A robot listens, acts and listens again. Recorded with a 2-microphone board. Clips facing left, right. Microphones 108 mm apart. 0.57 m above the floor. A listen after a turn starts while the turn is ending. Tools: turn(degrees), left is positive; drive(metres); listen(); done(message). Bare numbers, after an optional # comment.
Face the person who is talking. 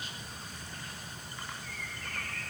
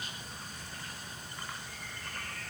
listen()
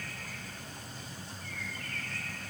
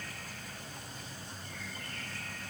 listen()
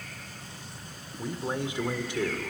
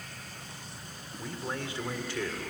# The man speaking: about 20° left or 160° left.
turn(20)
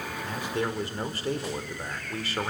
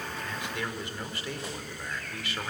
# So it is at 135° left.
turn(135)
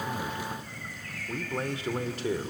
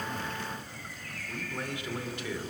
# The man speaking is now 45° left.
turn(45)
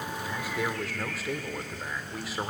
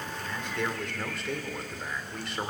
done("Facing the man speaking.")